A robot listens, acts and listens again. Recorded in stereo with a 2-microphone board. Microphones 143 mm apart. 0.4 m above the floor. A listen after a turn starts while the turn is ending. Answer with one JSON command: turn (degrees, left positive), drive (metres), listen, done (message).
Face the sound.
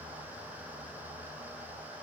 {"listen": true}
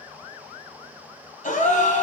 {"turn": 65}
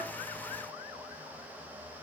{"listen": true}
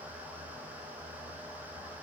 {"done": "I heard a gasp, but can't make it out now. It was about straight ahead or 50° left."}